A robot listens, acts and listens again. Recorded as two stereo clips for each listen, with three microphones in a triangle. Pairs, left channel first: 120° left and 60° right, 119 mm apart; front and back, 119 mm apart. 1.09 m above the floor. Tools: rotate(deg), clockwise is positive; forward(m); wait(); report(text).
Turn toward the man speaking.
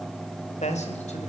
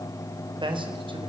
rotate(-135)
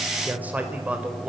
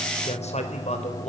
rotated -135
rotate(-20)
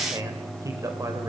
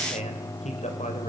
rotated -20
report("Found it: a man speaking, straight ahead, over 4 m away.")